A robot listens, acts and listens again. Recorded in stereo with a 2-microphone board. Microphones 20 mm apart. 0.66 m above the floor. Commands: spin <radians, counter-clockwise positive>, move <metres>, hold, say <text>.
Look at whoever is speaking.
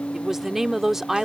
spin -0.26
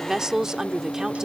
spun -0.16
spin -0.44
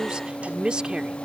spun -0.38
spin -2.27
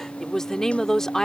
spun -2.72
spin 0.44
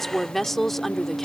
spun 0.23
spin 0.17
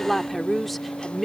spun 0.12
say Found it: a woman speaking, straight ahead.